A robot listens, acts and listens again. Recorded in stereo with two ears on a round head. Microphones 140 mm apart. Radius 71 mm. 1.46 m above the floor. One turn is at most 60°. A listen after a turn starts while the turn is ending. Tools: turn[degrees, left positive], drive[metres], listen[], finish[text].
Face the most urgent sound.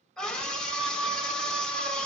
Action: turn[30]
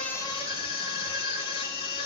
Thought: So it is at 145° left.
Action: turn[60]
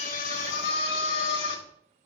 Thought: The scream is now 85° left.
Action: turn[60]
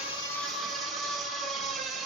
Action: finish[Found it: a scream, straight ahead, over 4 m away.]